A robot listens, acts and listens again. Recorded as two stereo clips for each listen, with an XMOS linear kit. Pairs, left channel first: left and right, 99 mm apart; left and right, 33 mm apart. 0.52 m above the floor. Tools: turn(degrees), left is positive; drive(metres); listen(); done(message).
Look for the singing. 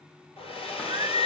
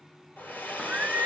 turn(degrees=-50)
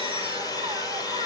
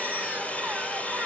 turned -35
listen()
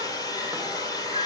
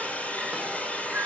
listen()
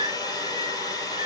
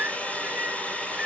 turn(degrees=-85)
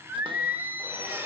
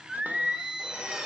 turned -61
turn(degrees=-25)
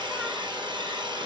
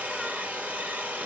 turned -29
listen()
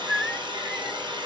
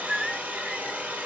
done("Facing the singing, under 1 m away.")